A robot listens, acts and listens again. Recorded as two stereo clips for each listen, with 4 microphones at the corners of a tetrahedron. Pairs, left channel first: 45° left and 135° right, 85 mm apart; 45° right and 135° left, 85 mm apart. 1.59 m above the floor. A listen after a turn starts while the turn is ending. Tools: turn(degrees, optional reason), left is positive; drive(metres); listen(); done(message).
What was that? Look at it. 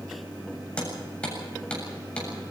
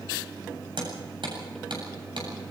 turn(degrees=125, reason="The hammering: 125° left.")
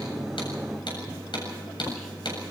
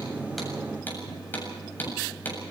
turn(degrees=25, reason="The hammering is now 25° left.")
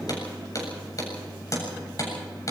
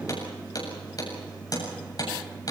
done("Found it: hammering, straight ahead, over 4 m away.")